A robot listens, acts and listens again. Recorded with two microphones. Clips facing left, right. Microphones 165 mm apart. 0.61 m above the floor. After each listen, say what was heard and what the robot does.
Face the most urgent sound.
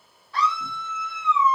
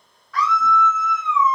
The scream: about 30° left or 150° left. Turn 30° left.
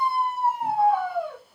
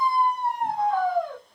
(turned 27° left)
Facing the scream.